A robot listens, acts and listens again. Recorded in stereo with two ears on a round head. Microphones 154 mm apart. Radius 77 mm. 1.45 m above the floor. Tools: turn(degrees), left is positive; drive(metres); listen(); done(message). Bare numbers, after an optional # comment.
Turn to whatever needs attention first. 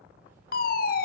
# The fire alarm: about 55° left or 125° left.
turn(55)
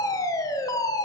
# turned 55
# So it is at 25° left.
turn(25)
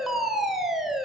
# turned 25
done("Found it: a fire alarm, straight ahead.")